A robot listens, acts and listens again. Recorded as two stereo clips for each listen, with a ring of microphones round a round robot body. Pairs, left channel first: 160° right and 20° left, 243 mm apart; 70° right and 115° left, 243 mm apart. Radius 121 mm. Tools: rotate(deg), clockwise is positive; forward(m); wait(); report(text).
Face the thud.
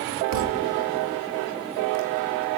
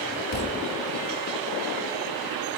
rotate(15)
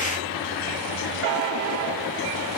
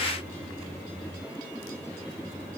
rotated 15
report("Facing where the thud came from. I can't hear it now.")